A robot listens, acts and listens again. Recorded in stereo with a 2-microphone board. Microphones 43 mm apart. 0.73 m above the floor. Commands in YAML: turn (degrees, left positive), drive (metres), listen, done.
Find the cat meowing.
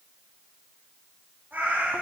turn: -50
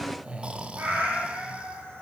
turn: -75
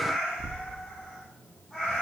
turn: 10
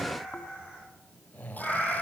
done: "Facing the cat meowing, over 4 m away."